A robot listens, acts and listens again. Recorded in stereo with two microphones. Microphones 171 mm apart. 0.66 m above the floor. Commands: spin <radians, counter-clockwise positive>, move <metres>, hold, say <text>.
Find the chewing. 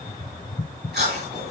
spin -1.57
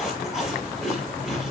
say Facing the chewing, over 4 m away.